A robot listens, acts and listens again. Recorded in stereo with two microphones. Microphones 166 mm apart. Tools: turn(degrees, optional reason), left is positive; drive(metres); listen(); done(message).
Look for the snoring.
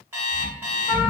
turn(degrees=30)
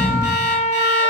turn(degrees=-20, reason="So it is at 20° right.")
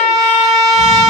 listen()
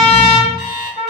listen()
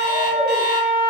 done("Facing where the snoring came from. I can't hear it now.")